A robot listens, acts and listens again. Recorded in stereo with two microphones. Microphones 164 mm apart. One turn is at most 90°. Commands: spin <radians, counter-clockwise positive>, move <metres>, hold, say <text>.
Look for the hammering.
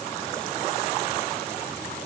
hold
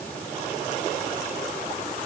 hold
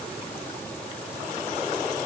say I can't make out hammering.